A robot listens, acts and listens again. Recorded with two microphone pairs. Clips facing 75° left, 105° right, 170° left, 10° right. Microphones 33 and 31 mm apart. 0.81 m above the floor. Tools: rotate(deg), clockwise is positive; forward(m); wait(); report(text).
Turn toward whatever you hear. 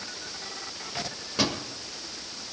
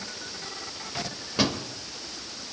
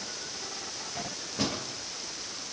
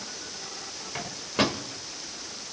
rotate(25)
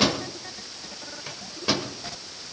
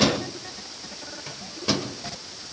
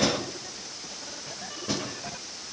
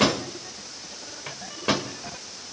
report("Found it: a microwave, straight ahead.")